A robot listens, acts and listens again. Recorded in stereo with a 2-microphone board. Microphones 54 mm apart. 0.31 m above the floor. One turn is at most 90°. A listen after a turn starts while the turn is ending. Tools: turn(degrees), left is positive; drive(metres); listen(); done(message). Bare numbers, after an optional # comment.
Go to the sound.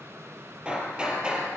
# The hammering: about 20° right or 160° right.
turn(-20)
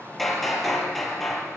drive(1.0)
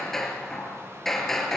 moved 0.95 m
drive(1.0)
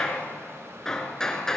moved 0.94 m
# The hammering is now 10° left.
turn(10)
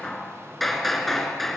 drive(1.0)
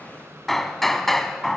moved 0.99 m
drive(1.0)
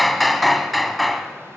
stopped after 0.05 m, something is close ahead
done("I am next to the hammering.")